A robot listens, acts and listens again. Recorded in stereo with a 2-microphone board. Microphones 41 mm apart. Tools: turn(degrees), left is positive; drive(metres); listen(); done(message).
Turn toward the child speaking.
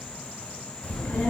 turn(degrees=35)
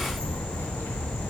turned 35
turn(degrees=105)
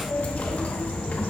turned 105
turn(degrees=40)
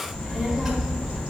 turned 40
turn(degrees=-10)
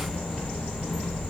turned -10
done("Facing the child speaking.")